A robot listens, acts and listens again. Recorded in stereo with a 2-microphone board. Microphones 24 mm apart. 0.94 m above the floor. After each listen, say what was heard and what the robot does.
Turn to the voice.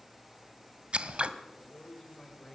The man speaking: about 20° left or 160° left. Turn 20° left.
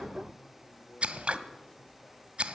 Keep listening.
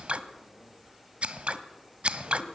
Keep listening.
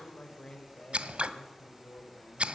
So it is at 140° left. Turn 140° left.
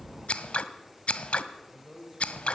The man speaking is now 15° right. Turn 15° right.
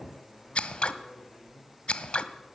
Found it: a man speaking, straight ahead.